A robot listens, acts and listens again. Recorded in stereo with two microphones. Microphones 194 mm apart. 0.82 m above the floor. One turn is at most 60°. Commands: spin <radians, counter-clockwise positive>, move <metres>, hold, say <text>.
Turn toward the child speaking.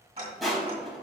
hold
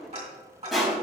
hold
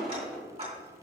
say I can't make out a child speaking to turn to.